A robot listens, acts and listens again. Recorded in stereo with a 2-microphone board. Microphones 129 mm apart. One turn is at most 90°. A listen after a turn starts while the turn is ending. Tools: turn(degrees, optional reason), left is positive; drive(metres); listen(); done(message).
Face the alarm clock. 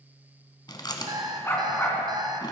turn(degrees=-35, reason="The alarm clock: about 35° right or 145° right.")
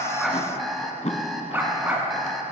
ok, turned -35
done("Facing the alarm clock, 1 to 2 m away.")